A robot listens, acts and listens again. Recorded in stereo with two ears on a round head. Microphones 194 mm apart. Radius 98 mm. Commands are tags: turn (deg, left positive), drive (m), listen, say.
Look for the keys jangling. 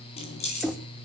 <turn deg="30"/>
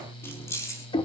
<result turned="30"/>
<turn deg="15"/>
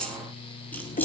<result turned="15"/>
<say>Found it: keys jangling, straight ahead.</say>